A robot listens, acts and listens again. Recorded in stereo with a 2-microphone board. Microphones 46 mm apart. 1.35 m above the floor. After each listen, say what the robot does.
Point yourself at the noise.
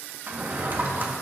Turn 45° right.
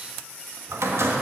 Turn 85° right.
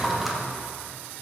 Facing the drawer, 1 to 2 m away.